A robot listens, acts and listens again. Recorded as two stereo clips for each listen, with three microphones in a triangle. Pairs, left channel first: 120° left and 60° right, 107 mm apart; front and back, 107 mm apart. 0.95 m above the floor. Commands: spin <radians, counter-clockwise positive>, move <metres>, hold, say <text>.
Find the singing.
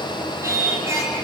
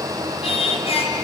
say Facing the singing.